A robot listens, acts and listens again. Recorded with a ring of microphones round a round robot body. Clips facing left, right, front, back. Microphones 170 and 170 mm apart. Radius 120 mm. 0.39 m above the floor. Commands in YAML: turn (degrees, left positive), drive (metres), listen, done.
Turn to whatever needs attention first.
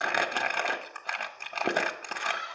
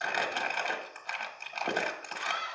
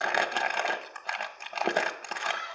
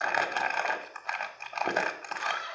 turn: -125
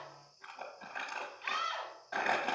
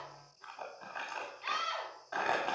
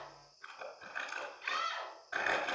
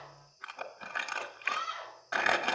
turn: -10
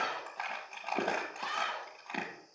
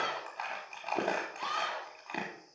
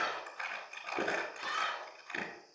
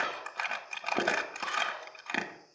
done: "Facing the scream, 2 to 4 m away."